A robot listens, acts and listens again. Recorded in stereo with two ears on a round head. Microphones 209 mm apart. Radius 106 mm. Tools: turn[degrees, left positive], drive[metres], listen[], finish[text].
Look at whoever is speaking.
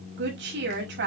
Thought: The woman speaking: about 50° right or 130° right.
Action: turn[-50]
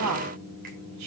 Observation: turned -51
Thought: So it is at 80° right.
Action: turn[-80]
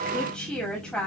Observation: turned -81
Action: finish[Found it: a woman speaking, straight ahead.]